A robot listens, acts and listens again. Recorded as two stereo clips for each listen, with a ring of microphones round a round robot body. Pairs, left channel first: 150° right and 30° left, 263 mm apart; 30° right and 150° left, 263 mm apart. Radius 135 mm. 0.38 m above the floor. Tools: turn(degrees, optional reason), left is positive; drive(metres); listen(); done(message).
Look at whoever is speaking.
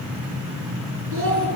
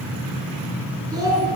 turn(degrees=75, reason="The child speaking: 75° left.")
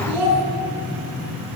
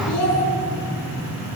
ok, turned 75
done("Facing the child speaking.")